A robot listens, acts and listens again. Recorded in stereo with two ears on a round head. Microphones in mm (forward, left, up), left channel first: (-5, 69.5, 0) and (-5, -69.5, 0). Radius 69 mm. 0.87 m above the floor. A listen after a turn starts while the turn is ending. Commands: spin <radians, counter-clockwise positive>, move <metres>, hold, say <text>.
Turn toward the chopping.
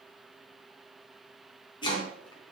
spin 0.52
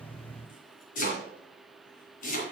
spin 2.09
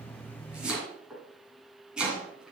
say Facing the chopping.